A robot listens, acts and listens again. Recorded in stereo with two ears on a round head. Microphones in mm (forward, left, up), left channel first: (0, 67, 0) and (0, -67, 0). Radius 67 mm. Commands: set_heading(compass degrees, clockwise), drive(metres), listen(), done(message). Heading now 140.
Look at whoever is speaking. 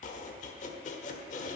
listen()
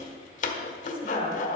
set_heading(105)
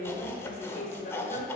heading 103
set_heading(338)
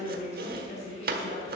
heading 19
set_heading(329)
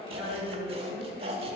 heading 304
set_heading(329)
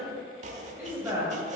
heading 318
set_heading(333)
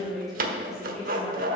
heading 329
done("Facing the woman speaking.")